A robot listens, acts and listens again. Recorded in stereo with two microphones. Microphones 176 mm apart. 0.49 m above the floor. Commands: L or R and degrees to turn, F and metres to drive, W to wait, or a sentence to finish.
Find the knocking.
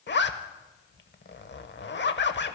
W
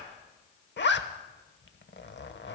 W
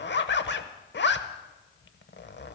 I can't make out knocking, only a zipper.